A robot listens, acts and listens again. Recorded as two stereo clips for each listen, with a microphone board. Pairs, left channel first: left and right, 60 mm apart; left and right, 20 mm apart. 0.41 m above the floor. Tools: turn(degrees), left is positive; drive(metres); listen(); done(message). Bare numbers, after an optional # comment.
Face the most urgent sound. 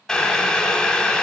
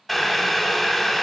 listen()
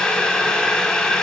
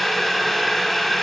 listen()
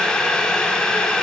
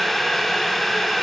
done("I can't make out anything urgent, only boiling.")